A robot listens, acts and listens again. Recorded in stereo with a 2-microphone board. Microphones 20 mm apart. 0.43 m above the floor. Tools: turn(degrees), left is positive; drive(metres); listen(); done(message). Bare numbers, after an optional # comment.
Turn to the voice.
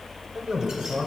# The man speaking: about 50° right or 130° right.
turn(-50)
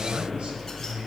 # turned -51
# So it is at 60° right.
turn(-60)
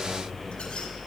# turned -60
listen()
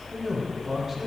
# The man speaking is now 15° right.
turn(-15)
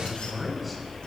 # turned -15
done("Found it: a man speaking, straight ahead.")